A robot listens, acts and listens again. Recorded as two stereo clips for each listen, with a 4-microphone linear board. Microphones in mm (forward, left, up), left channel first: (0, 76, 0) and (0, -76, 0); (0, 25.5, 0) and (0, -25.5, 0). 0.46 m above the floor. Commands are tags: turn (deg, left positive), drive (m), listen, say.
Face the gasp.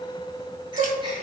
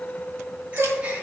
<turn deg="-30"/>
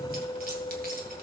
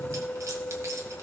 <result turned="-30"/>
<listen/>
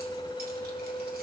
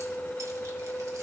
<say>I heard a gasp, but can't make it out now. It was about straight ahead or 120° right.</say>